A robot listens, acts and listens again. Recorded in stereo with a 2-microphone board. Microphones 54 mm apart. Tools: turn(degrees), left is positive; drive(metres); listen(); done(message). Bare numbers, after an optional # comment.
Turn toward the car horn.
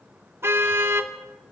# The car horn: about 50° right or 130° right.
turn(-50)
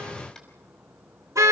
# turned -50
# So it is at 80° right.
turn(-80)
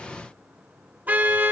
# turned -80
# The car horn is now 35° right.
turn(-35)
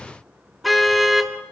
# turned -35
done("Found it: a car horn, straight ahead, 2 to 4 m away.")